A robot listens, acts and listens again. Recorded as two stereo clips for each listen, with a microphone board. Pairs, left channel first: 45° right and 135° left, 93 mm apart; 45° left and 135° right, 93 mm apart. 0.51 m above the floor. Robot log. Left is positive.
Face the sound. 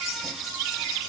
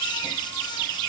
cmd idle
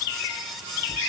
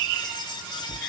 cmd idle
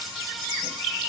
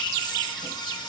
end: I can't make out anything to turn to.